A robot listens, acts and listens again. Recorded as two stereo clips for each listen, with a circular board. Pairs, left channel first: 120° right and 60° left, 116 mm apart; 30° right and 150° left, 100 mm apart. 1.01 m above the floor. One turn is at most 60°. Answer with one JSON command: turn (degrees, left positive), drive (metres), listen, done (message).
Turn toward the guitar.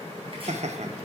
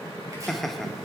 {"listen": true}
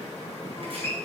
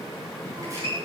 {"turn": 60}
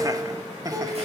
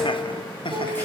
{"turn": 60}
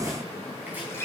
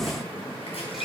{"turn": 60}
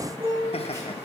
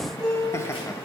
{"turn": 20}
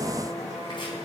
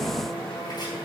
{"listen": true}
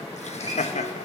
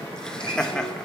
{"listen": true}
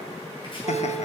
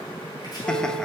{"done": "Facing where the guitar came from. I can't hear it now."}